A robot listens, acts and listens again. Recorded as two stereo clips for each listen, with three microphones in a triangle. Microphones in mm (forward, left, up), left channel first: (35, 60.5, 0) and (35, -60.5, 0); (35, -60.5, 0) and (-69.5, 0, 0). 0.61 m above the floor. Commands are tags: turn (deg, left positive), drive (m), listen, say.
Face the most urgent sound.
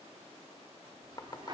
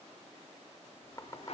<listen/>
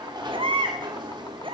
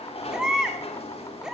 <turn deg="-125"/>
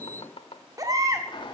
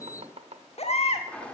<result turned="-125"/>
<turn deg="-30"/>
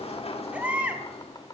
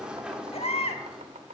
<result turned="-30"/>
<turn deg="-10"/>
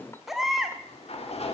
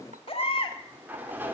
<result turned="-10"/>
<say>Facing the baby crying, 1 to 2 m away.</say>